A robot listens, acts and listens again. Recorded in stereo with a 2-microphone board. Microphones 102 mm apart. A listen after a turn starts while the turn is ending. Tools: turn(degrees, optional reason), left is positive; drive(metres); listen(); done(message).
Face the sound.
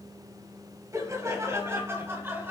turn(degrees=-20, reason="The laughter: about 20° right or 160° right.")
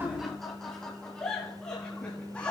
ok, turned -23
turn(degrees=15, reason="So it is at 15° left.")
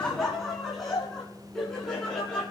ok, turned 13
done("Facing the laughter, over 4 m away.")